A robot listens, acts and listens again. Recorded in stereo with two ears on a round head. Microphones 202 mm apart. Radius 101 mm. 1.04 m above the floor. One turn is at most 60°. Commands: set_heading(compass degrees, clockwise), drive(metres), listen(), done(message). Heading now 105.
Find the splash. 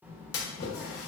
set_heading(45)
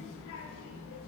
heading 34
listen()
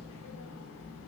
done("I heard a splash, but can't make it out now. It was about straight ahead or 40° left.")